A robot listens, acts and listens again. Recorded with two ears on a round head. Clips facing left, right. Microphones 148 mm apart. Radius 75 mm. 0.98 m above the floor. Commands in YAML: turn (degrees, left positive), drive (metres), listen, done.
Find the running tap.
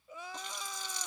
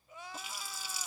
turn: -30
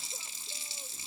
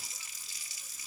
turn: 25
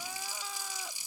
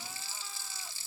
turn: 15
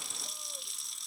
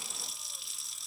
done: "Facing the running tap."